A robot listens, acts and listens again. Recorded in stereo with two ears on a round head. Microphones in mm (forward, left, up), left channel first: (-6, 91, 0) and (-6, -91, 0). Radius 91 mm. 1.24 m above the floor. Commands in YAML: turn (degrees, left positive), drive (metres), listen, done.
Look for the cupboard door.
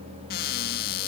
turn: 50
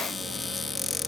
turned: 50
done: "Found it: a cupboard door, straight ahead."